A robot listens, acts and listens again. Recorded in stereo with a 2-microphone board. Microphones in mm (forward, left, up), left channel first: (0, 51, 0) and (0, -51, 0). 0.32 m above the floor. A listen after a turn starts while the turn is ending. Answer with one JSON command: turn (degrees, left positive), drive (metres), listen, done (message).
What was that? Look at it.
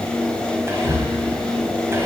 {"turn": -25}
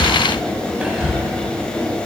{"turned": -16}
{"turn": -10}
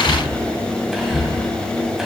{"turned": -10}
{"done": "Found it: whispering, straight ahead, 1 to 2 m away."}